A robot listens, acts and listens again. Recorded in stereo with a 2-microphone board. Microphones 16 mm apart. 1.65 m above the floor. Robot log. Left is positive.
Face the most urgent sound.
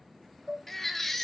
note: The baby crying: about 15° left or 165° left.
cmd yaw +15
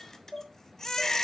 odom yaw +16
note: So it is at 150° left.
cmd yaw +150
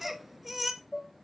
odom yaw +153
note: The baby crying is now 10° right.
cmd yaw -10
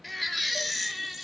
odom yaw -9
end: Found it: a baby crying, straight ahead, under 1 m away.